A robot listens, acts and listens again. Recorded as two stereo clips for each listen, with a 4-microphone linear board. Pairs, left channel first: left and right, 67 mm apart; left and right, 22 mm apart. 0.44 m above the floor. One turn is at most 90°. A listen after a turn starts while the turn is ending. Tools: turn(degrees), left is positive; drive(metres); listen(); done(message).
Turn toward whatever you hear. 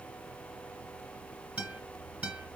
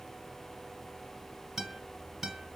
turn(degrees=-20)
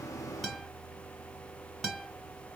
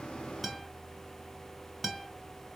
done("Found it: a guitar, straight ahead, 1 to 2 m away.")